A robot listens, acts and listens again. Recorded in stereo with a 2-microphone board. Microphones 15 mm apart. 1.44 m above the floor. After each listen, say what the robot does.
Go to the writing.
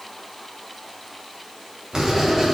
Turn 45° right.
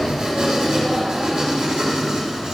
Turn 85° right.
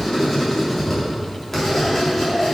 Turn 25° left.
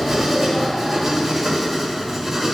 Turn 10° right.
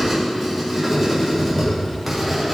Drive 1.0 m forward.
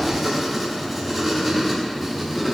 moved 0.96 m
Drive 1.0 m forward.
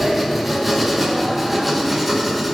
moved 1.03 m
Turn 10° right.
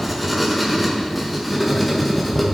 Drive 1.0 m forward.
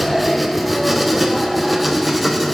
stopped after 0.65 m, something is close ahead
I am next to the writing.